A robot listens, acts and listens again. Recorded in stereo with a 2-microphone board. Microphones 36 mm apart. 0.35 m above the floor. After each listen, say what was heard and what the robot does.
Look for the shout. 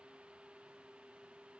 Keep listening.
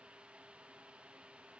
Keep listening.
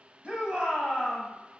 The shout: about 30° right or 150° right. Turn 30° right.
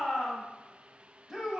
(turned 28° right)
So it is at 10° right. Turn 10° right.
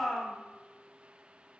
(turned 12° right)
Found it: a shout, straight ahead, 1 to 2 m away.